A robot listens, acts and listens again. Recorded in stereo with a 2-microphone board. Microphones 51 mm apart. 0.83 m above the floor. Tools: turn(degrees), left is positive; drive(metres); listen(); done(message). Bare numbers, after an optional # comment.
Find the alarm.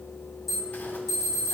turn(30)
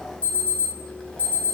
# So it is at 150° left.
turn(150)
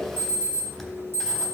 # The alarm is now 50° right.
turn(-50)
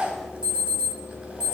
# The alarm is now 15° right.
turn(-15)
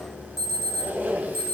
done("Facing the alarm.")